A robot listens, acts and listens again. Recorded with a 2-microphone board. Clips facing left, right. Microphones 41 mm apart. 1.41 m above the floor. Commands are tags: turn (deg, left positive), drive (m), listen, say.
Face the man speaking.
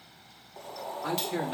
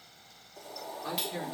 <turn deg="90"/>
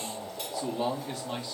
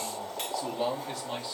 <say>Found it: a man speaking, straight ahead, 2 to 4 m away.</say>